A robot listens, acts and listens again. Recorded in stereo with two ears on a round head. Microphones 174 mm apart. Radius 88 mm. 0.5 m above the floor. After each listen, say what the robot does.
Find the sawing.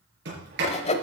Turn 35° left.
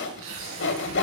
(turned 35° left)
Turn 110° left.
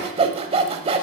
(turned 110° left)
Turn 30° right.
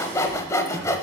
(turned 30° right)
Turn 15° left.
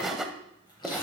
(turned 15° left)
Facing the sawing.